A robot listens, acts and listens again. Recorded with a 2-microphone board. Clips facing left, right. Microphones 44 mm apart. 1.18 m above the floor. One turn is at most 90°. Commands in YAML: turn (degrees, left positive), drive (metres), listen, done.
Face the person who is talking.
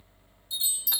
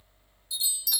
listen: true
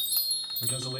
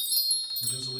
turn: 70
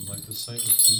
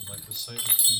done: "Facing the man speaking."